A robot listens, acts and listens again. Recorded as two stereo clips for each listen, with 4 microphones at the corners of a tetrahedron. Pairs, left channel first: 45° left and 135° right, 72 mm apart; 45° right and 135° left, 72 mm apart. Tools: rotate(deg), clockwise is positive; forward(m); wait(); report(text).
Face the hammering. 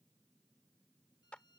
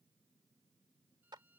wait()
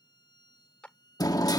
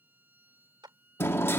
rotate(-10)
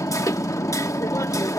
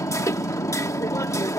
report("Found it: hammering, straight ahead.")